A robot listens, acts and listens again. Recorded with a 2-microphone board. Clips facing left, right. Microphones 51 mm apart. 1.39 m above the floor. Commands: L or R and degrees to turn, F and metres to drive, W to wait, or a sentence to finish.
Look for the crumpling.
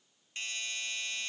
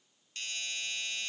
W
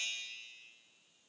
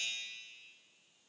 W
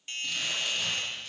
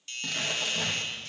R90
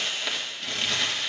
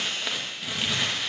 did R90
R10
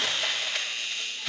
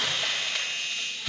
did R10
Facing the crumpling.